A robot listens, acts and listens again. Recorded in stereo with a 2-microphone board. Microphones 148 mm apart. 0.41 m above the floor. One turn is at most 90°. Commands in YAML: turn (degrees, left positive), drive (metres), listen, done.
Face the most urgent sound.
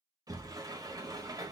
listen: true
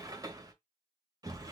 listen: true
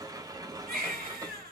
turn: -90
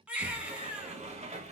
turn: -10
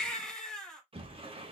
done: "Facing the baby crying, 1 to 2 m away."